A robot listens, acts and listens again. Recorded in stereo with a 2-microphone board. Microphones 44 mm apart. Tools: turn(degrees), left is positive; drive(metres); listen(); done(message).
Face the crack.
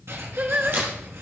turn(degrees=-50)
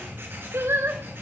listen()
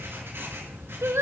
done("I heard a crack, but can't make it out now. It was about straight ahead or 80° right.")